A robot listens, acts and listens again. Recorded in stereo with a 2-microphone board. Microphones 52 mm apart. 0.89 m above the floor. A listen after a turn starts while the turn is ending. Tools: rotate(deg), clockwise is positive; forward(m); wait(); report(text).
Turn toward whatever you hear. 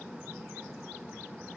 wait()
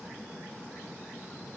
wait()
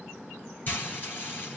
rotate(-30)
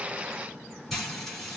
report("Found it: frying, straight ahead.")